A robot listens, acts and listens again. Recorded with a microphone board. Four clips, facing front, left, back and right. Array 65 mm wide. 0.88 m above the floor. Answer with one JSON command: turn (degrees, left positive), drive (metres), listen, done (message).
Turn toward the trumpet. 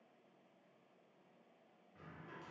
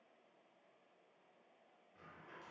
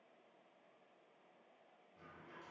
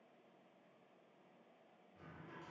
{"listen": true}
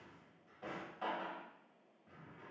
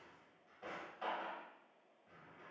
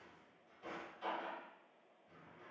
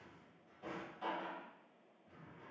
{"listen": true}
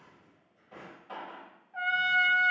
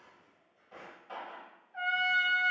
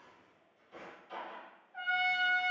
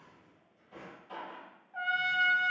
{"turn": -45}
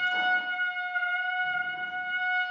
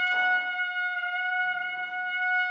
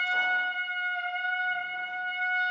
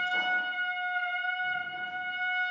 {"turn": 25}
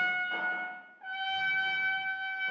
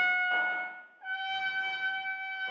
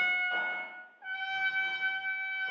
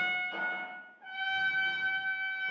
{"turn": 20}
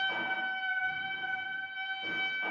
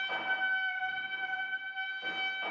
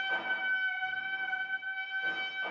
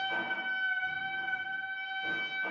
{"done": "Facing the trumpet, 1 to 2 m away."}